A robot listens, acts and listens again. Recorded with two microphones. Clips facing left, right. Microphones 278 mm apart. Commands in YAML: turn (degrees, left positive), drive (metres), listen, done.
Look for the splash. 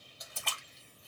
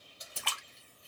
turn: -90
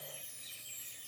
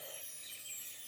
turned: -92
done: "I heard a splash from this way, but can't make it out now."